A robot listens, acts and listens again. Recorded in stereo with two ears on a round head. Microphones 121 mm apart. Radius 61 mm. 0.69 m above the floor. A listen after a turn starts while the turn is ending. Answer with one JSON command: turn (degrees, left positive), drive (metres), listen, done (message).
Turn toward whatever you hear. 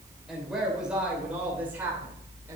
{"turn": -15}
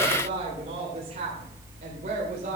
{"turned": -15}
{"turn": -120}
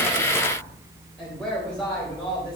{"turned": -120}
{"turn": 10}
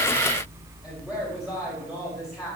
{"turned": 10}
{"done": "Found it: a woman speaking, straight ahead."}